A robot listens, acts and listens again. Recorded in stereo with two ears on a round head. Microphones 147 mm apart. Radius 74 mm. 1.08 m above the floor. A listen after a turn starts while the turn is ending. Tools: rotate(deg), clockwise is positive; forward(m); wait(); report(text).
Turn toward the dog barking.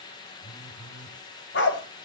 rotate(-75)
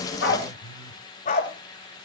rotate(-45)
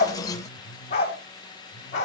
rotate(-40)
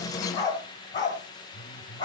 rotate(-25)
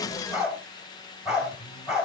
report("Found it: a dog barking, straight ahead.")